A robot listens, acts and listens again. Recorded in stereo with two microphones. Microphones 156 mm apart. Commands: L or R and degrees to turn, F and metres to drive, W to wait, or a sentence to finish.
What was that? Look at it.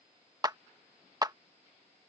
R25
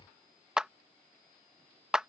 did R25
Facing the clap.